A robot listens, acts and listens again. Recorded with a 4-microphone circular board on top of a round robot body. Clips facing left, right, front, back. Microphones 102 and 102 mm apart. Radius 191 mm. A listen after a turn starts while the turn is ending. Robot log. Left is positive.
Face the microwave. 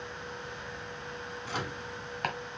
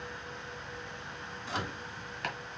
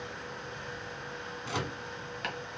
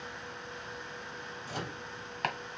end: Facing the microwave.